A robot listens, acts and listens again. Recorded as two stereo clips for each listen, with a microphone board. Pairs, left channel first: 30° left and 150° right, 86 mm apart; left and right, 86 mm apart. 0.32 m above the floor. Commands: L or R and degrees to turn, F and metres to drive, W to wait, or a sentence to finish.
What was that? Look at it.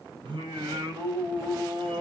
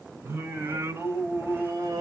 R130
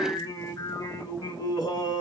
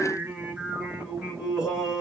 Facing the singing, 1 to 2 m away.